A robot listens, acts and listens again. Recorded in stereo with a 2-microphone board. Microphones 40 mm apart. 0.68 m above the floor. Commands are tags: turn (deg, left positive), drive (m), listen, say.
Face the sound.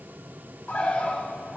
<turn deg="40"/>
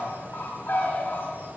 <turn deg="90"/>
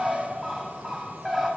<say>Facing the bird.</say>